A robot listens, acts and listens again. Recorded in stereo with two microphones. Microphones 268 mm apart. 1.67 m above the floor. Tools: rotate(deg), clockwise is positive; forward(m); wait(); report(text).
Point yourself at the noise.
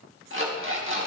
rotate(50)
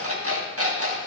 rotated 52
rotate(70)
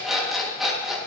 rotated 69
report("Found it: an alarm clock, straight ahead, 1 to 2 m away.")